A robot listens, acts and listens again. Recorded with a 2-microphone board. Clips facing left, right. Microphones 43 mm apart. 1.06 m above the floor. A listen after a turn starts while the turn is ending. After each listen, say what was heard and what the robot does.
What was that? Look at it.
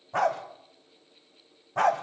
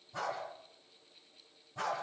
The dog barking: about 60° left or 120° left. Turn 60° left.
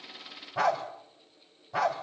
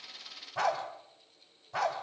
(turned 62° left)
Found it: a dog barking, straight ahead, 2 to 4 m away.